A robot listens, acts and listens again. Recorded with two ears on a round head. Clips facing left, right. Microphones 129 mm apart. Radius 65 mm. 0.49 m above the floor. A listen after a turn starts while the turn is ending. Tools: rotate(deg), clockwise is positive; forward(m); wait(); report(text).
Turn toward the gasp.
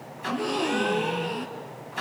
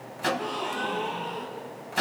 rotate(-65)
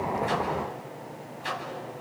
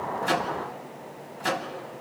wait()
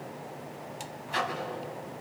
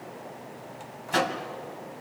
report("I heard a gasp, but can't make it out now. It was about straight ahead or 50° left.")